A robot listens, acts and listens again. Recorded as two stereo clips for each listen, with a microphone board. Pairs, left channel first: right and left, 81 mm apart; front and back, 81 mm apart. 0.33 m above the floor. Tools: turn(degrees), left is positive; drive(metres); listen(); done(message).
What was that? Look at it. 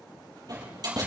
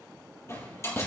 turn(degrees=55)
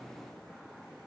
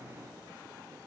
done("Facing where the door slam came from. I can't hear it now.")